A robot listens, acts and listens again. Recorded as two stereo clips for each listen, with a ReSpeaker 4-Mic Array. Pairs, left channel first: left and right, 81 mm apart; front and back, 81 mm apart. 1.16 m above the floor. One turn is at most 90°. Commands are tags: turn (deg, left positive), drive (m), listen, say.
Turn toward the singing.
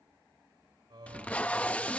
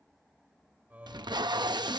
<turn deg="-90"/>
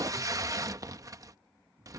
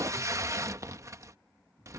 <turn deg="-35"/>
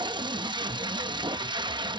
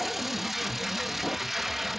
<listen/>
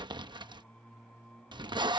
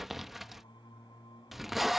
<turn deg="10"/>
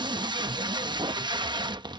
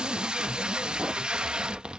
<listen/>
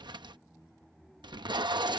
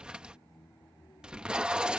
<say>Found it: singing, straight ahead.</say>